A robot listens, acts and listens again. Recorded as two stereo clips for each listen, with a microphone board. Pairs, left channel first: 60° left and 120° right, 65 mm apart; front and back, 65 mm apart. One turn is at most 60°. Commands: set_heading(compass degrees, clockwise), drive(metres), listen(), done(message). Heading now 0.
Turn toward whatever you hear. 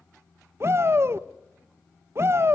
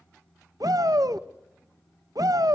set_heading(60)
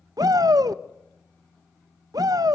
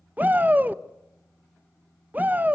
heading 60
set_heading(120)
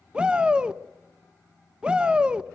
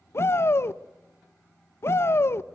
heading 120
set_heading(165)
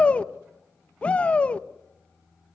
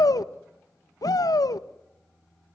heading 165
set_heading(175)
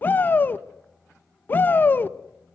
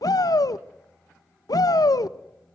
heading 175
done("Found it: a shout, straight ahead.")